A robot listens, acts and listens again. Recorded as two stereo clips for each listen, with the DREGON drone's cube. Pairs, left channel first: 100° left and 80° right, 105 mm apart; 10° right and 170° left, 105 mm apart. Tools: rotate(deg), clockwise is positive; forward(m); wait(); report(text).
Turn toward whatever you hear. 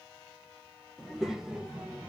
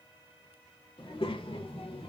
report("Found it: a child speaking, straight ahead, 1 to 2 m away.")